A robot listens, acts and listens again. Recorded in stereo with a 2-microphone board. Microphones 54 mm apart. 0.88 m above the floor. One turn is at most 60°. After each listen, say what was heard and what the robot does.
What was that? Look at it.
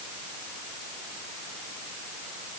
Keep listening.
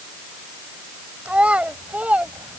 The child speaking: about 25° right or 155° right. Turn 25° right.
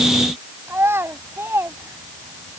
So it is at 125° right. Turn 60° right.
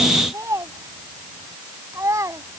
The child speaking is now 75° right. Turn 60° right.
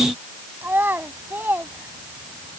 The child speaking is now 40° right. Turn 40° right.
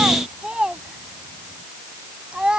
The child speaking is now 15° right. Turn 15° right.
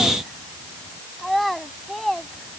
Facing the child speaking.